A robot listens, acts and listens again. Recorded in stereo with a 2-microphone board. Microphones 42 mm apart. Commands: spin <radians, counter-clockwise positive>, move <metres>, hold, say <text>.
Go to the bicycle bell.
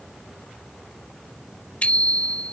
spin 0.61
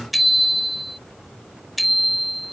move 1.0
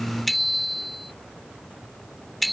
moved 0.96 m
move 1.0
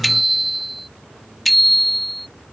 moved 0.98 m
move 1.0
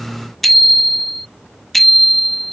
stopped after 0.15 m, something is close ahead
say Arrived at the bicycle bell, straight ahead.